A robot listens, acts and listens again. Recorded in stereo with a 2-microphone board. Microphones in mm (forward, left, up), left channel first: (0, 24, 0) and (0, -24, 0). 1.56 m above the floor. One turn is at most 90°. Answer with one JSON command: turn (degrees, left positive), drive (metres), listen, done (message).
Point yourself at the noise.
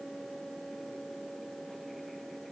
{"listen": true}
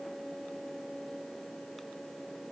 {"listen": true}
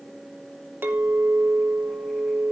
{"turn": -50}
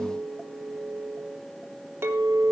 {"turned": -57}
{"turn": -75}
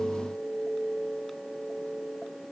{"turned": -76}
{"done": "Facing the clink."}